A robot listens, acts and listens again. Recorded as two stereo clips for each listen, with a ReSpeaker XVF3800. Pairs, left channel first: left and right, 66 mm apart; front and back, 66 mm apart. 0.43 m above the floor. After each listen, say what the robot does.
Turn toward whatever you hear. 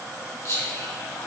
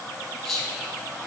Turn 85° left.
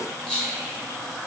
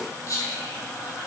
Turn 20° left.
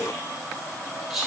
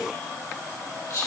Found it: whispering, straight ahead.